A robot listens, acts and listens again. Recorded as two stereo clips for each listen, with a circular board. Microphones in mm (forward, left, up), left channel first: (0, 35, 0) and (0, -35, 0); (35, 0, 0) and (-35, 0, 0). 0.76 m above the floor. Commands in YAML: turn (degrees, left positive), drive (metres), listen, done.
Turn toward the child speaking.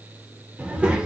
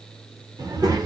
turn: -165
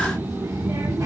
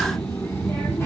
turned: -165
turn: -55
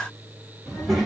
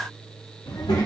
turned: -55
done: "Found it: a child speaking, straight ahead."